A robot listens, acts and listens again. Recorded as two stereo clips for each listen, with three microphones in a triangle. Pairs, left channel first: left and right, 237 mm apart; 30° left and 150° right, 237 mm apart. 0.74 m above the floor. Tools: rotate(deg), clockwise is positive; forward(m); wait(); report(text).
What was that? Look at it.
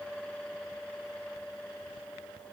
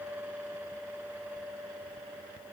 wait()
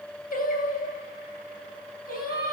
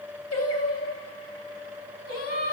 rotate(-40)
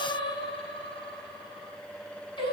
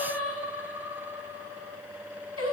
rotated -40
rotate(-20)
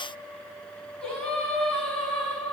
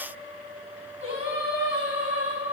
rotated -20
report("Facing the singing.")